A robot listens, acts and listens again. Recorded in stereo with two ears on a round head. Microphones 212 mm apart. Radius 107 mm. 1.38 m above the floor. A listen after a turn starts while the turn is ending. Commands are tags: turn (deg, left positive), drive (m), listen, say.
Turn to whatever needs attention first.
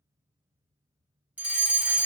<turn deg="-30"/>
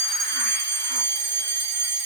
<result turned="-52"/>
<turn deg="-120"/>
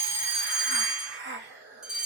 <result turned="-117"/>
<say>Found it: a fire alarm, straight ahead.</say>